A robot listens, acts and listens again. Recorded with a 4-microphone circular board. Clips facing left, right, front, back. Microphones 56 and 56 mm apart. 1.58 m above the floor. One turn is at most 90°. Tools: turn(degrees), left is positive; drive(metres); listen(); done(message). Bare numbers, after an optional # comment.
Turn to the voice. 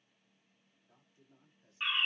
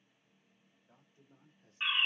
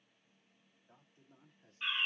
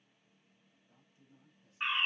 # The man speaking: 40° right.
turn(-40)
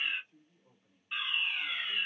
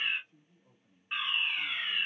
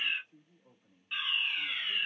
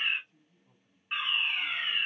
# The man speaking is now 10° left.
turn(10)
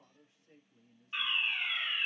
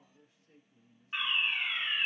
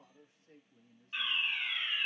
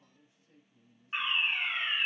# The man speaking is now 10° left.
turn(10)
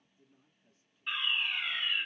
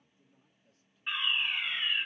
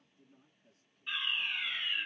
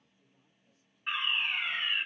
# The man speaking is now 10° left.
turn(10)
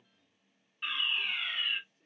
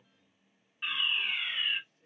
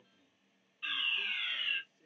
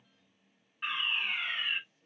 done("Found it: a man speaking, straight ahead.")